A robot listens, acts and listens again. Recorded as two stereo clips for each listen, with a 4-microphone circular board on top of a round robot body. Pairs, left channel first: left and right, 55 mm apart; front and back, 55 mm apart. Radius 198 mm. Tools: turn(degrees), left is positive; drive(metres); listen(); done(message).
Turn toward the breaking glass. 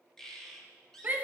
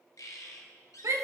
listen()
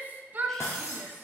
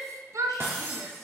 turn(degrees=130)
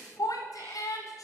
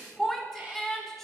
done("Facing where the breaking glass came from. I can't hear it now.")